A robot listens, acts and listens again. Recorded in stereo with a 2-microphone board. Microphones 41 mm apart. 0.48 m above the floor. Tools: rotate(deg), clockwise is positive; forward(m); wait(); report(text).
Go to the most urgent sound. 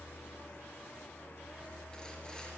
wait()
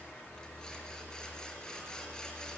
wait()
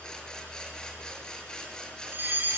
rotate(50)
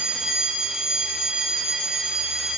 rotate(15)
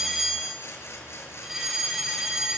forward(1.0)
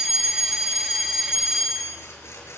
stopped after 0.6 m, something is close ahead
report("Something is in my way. I am facing the fire alarm but have not reached it.")